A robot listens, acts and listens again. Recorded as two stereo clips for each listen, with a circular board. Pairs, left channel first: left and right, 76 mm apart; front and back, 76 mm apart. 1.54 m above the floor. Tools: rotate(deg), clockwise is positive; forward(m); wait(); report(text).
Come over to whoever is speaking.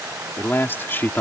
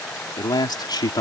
rotate(-25)
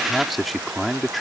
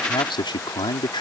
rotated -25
forward(1.0)
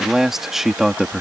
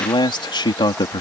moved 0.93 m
forward(1.0)
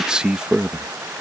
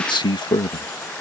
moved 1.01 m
rotate(10)
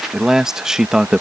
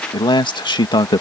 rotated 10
rotate(10)
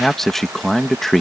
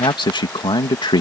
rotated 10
forward(1.0)
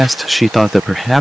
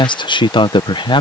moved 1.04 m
forward(1.0)
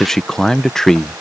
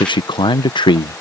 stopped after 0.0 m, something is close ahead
report("I am next to the man speaking.")